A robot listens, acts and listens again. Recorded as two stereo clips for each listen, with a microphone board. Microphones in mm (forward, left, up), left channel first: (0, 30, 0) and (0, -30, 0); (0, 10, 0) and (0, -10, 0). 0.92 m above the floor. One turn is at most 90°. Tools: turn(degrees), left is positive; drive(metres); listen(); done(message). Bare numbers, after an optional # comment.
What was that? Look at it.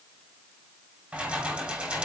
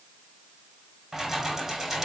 turn(-30)
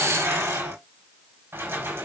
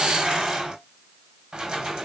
# So it is at 145° right.
turn(-90)
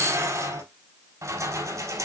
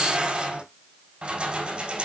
# The keys jangling is now 60° right.
turn(-60)
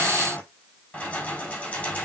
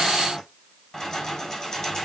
# The keys jangling is now 20° left.
turn(20)
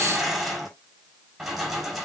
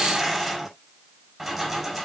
done("Facing the keys jangling.")